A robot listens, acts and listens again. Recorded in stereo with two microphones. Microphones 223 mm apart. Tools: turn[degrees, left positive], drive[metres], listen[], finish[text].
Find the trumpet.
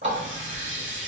Action: listen[]
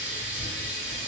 Action: listen[]
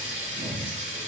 Action: finish[I can't make out a trumpet, only a running tap.]